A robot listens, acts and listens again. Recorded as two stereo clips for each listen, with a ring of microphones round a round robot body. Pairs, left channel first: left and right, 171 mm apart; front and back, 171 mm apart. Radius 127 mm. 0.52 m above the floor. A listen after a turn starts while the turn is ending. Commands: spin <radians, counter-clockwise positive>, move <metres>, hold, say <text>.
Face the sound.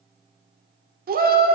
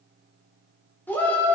spin -1.40
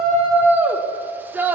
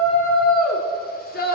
spin -0.26
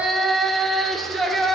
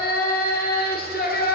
say Found it: a shout, straight ahead, 1 to 2 m away.